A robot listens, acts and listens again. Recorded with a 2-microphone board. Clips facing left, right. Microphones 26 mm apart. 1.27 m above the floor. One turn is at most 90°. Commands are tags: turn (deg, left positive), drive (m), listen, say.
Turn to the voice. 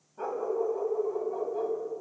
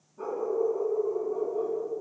<listen/>
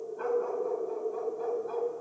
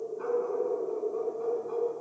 <listen/>
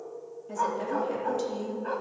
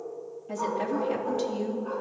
<turn deg="-15"/>
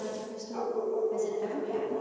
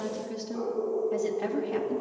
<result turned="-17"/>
<turn deg="-90"/>
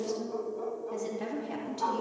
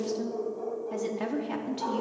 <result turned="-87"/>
<turn deg="-60"/>
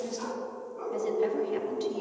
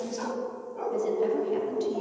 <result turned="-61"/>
<listen/>
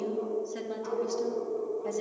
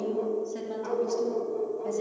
<listen/>
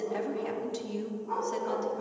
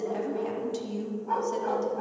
<say>Facing the woman speaking, 2 to 4 m away.</say>